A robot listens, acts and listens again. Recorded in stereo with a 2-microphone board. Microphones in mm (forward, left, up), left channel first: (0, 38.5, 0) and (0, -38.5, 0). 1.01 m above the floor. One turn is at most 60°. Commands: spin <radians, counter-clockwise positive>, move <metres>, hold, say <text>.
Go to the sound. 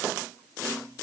hold
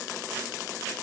hold
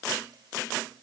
say I can't make out anything to turn to.